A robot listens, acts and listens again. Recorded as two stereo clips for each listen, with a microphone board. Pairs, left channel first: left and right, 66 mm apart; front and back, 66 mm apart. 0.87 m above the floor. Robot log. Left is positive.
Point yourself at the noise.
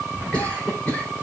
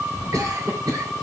note: The cough: 160° left.
cmd yaw +160
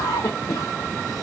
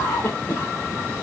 note: The cough is now 60° left.
cmd yaw +60
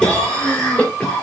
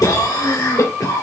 note: The cough is now 15° left.
cmd yaw +15
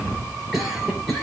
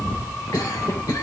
end: Found it: a cough, straight ahead, 2 to 4 m away.